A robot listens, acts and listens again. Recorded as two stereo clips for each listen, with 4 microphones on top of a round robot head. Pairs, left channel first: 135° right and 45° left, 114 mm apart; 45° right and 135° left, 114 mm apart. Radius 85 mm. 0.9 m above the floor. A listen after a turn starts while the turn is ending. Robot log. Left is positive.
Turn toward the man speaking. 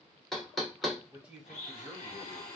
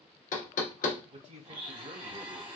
note: The man speaking: 130° left.
cmd yaw +130
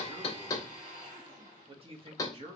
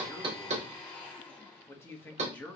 note: The man speaking is now 30° left.
cmd yaw +30
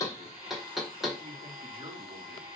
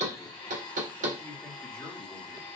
cmd idle
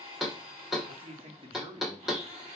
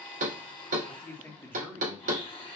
note: The man speaking is now 20° left.
cmd yaw +20
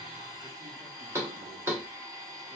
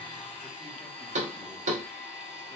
cmd idle
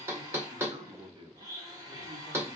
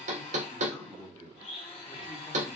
end: Facing the man speaking, 1 to 2 m away.